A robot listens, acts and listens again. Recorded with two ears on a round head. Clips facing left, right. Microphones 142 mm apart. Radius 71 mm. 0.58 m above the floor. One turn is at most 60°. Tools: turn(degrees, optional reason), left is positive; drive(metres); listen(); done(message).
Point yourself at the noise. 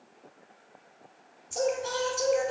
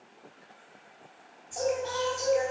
turn(degrees=60)
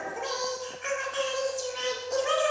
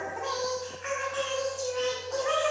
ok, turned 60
turn(degrees=35, reason="So it is at 35° left.")
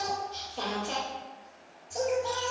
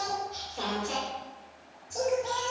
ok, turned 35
done("Found it: singing, straight ahead.")